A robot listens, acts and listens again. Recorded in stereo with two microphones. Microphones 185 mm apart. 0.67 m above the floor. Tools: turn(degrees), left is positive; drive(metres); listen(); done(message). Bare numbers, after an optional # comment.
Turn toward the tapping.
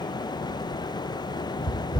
# The tapping: about 45° left or 135° left.
turn(45)
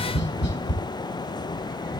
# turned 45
# So it is at 90° left.
turn(90)
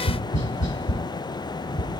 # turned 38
# The tapping is now 50° left.
turn(50)
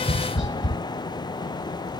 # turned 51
done("Facing the tapping, 1 to 2 m away.")